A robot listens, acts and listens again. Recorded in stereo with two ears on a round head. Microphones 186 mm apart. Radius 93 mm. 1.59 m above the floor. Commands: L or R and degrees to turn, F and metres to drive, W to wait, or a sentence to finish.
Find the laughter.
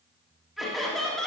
L30
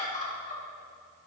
L140
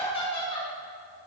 L25
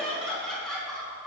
Found it: laughter, straight ahead.